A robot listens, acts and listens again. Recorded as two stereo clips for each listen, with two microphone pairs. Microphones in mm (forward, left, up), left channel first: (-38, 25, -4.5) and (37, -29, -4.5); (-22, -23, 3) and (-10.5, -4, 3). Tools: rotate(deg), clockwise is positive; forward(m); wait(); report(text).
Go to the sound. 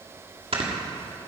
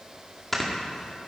rotate(40)
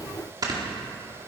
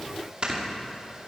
rotate(-10)
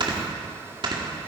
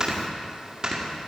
forward(1.0)
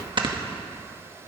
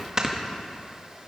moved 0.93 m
forward(1.0)
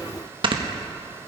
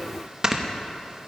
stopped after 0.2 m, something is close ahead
report("I am next to the snoring.")